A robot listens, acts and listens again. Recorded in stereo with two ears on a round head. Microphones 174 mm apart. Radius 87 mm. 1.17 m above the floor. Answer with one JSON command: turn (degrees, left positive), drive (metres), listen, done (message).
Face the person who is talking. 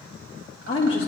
{"turn": 30}
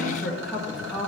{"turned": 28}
{"done": "Facing the woman speaking, 1 to 2 m away."}